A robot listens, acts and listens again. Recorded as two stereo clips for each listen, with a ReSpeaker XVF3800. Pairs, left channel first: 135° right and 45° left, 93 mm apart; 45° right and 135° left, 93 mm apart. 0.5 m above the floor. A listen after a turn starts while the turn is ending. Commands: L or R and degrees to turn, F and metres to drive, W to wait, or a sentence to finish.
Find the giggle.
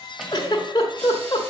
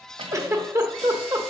R170
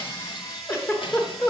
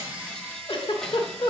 R75
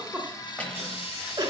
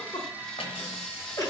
Facing the giggle, 1 to 2 m away.